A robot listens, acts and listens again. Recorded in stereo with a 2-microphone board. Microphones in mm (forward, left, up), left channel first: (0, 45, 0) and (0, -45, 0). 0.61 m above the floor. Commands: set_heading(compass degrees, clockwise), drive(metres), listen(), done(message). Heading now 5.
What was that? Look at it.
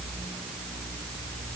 listen()
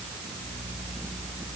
listen()
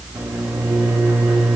set_heading(30)
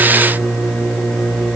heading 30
done("Facing the microwave.")